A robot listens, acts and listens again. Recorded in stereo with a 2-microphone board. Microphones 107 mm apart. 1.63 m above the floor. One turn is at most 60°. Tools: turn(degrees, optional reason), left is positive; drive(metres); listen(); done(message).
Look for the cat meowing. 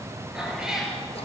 turn(degrees=-30)
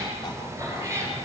turn(degrees=-60, reason="So it is at 155° right.")
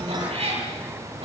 turn(degrees=-60, reason="The cat meowing is now 105° right.")
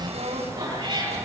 turn(degrees=-40, reason="The cat meowing is now 40° right.")
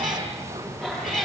done("Found it: a cat meowing, straight ahead.")